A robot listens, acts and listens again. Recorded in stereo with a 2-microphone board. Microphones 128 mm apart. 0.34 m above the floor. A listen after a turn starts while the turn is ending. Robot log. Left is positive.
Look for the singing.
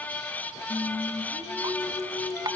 note: The singing: about 65° left or 115° left.
cmd yaw +65
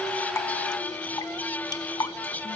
cmd idle
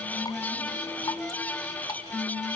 note: So it is at 40° left.
cmd yaw +40
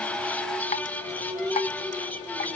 note: The singing is now 10° right.
cmd yaw -10
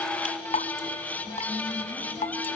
cmd idle
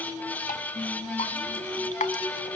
end: Found it: singing, straight ahead.